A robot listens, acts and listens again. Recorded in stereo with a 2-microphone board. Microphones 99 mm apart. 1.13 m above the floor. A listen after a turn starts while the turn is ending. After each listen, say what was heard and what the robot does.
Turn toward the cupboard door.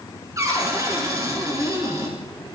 The cupboard door: about 35° right or 145° right. Turn 35° right.
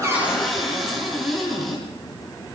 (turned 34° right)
Facing the cupboard door, over 4 m away.